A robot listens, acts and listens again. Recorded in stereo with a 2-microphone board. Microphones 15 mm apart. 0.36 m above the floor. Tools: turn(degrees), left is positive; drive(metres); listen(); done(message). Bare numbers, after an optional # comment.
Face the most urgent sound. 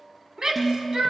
# The shout: about 65° right or 115° right.
turn(-65)
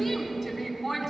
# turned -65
# So it is at 10° right.
turn(-10)
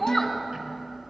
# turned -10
done("Facing the shout.")